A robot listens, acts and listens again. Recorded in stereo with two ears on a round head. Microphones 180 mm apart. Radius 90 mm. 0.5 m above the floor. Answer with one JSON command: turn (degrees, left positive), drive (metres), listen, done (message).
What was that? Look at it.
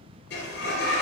{"turn": 55}
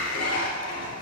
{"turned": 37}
{"turn": 85}
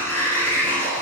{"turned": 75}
{"turn": 10}
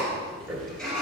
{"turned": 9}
{"done": "Facing the sliding door."}